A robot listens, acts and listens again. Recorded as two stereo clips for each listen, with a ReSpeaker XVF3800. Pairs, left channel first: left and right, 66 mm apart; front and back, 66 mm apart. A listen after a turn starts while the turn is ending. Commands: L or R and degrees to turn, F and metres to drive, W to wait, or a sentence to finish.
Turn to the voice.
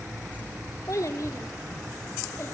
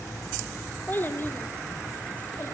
L40
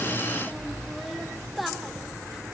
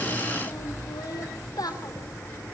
Found it: a child speaking, straight ahead.